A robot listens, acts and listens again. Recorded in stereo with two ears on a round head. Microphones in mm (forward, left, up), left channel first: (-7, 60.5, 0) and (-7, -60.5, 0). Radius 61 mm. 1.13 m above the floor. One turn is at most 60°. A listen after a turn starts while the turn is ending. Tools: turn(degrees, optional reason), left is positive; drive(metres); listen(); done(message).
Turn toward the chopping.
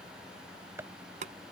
turn(degrees=-20, reason="The chopping: about 20° right or 160° right.")
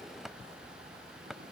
done("Facing the chopping.")